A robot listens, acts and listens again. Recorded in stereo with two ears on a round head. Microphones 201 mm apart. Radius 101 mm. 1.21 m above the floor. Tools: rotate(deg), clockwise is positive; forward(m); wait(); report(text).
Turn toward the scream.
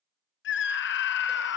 rotate(-55)
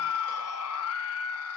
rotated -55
rotate(-70)
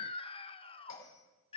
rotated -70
rotate(-25)
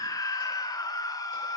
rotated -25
rotate(-15)
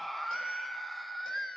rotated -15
report("Found it: a scream, straight ahead, under 1 m away.")